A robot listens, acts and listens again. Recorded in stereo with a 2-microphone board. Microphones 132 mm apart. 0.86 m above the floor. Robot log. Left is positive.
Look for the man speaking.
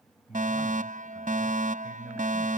cmd yaw -30
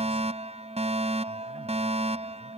cmd idle
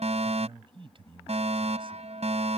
note: So it is at 140° right.
cmd yaw -140
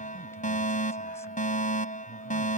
cmd idle
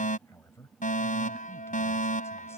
note: The man speaking is now 20° left.
cmd yaw +20
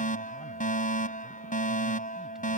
cmd idle
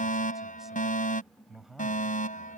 end: Facing the man speaking.